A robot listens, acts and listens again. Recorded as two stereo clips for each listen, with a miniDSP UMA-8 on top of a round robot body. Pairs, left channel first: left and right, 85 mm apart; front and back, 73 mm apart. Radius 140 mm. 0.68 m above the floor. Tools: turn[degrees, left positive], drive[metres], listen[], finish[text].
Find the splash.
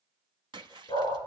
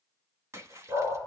Thought: The splash: 125° right.
Action: turn[-125]
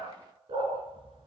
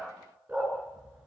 Action: finish[Facing where the splash came from. I can't hear it now.]